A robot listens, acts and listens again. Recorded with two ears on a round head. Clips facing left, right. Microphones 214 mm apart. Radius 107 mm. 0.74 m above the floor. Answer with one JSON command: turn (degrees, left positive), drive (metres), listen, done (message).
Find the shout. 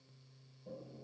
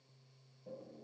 {"listen": true}
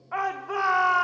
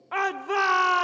{"turn": -50}
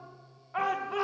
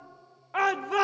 {"turn": -75}
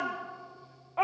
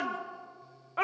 {"turn": -20}
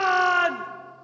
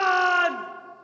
{"done": "Found it: a shout, straight ahead."}